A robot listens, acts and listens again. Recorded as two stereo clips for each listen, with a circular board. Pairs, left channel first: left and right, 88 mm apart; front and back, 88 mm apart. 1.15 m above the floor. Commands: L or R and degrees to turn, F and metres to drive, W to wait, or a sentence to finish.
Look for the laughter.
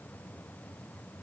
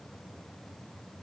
W
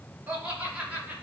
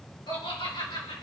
R15
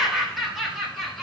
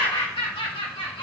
Facing the laughter.